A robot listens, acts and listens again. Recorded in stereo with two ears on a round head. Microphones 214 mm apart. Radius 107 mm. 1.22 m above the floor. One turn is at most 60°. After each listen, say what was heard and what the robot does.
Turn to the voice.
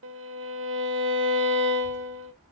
The child speaking: about 35° right or 145° right. Turn 35° right.
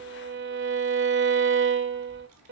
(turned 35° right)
So it is at 110° right. Turn 60° right.
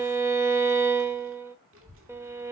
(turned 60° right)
The child speaking is now 60° right. Turn 60° right.
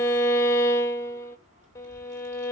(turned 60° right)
The child speaking is now 30° right. Turn 30° right.
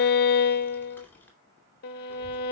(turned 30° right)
The child speaking is now 10° left. Turn 10° left.
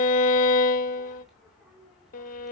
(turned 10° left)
Facing the child speaking, 2 to 4 m away.